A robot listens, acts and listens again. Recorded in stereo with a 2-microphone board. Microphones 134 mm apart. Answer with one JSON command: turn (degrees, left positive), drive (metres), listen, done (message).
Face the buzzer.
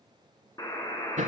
{"turn": 30}
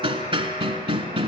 {"turn": 120}
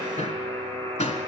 {"turn": 20}
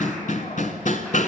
{"listen": true}
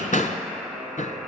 {"done": "Facing the buzzer, 2 to 4 m away."}